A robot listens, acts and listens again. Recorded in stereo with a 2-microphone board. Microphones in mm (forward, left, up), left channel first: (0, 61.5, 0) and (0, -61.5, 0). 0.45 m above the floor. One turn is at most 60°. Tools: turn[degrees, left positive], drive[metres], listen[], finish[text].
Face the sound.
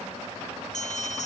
Thought: The bell: about 75° left or 105° left.
Action: turn[60]
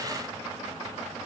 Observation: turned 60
Action: listen[]
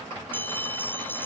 Thought: So it is at 15° left.
Action: turn[15]
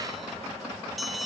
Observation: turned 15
Action: finish[Found it: a bell, straight ahead.]